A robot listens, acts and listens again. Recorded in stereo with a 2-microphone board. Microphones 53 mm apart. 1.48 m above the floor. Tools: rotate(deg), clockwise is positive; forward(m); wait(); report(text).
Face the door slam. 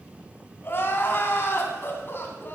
wait()
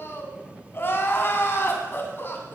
wait()
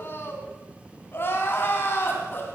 report("I can't make out a door slam to turn to.")